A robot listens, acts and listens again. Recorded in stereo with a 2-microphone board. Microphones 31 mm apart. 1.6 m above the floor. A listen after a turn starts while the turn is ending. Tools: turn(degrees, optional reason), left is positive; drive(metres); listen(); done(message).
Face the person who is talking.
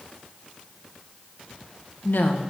turn(degrees=90)
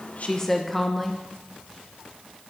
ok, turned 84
turn(degrees=10, reason="So it is at 10° left.")
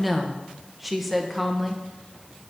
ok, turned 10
done("Facing the woman speaking, 1 to 2 m away.")